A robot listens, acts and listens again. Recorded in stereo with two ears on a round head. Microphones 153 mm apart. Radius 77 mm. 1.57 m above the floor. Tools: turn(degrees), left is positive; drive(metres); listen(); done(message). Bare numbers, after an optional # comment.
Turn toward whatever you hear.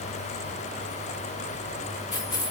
# The keys jangling: about 25° left or 155° left.
turn(25)
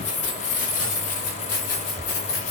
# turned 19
# So it is at 120° left.
turn(120)
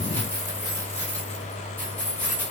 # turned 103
# The keys jangling is now 10° left.
turn(10)
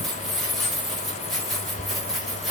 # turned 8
done("Found it: keys jangling, straight ahead, over 4 m away.")